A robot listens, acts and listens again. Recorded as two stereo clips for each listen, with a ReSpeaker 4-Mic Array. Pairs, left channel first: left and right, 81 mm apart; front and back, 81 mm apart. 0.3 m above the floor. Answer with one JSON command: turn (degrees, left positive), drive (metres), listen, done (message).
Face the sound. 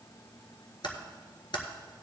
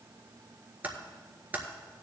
{"turn": 110}
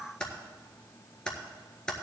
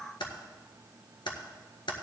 {"turn": 10}
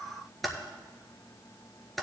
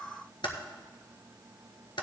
{"done": "Found it: typing on a keyboard, straight ahead, 1 to 2 m away."}